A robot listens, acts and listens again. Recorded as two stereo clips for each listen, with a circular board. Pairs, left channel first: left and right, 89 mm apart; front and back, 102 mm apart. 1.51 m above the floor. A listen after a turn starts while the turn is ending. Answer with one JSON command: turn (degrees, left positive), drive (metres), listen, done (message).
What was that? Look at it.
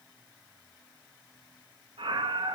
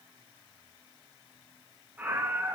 {"turn": -105}
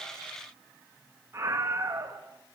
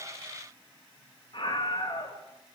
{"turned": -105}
{"turn": -30}
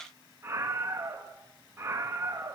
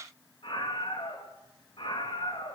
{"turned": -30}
{"turn": -30}
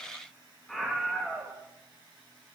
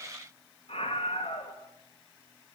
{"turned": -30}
{"done": "Found it: a scream, straight ahead."}